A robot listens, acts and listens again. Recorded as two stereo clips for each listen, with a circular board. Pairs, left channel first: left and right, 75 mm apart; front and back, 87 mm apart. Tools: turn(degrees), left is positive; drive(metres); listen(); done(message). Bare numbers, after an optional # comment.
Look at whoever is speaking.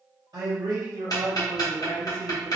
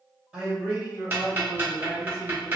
# The man speaking: 105° right.
turn(-105)
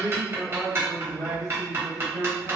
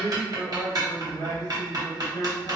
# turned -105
done("Facing the man speaking.")